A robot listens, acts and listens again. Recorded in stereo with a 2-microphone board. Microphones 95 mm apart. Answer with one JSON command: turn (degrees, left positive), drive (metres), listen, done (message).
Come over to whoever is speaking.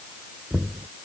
{"listen": true}
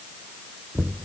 {"listen": true}
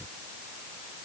{"done": "I can't make out anyone speaking to turn to."}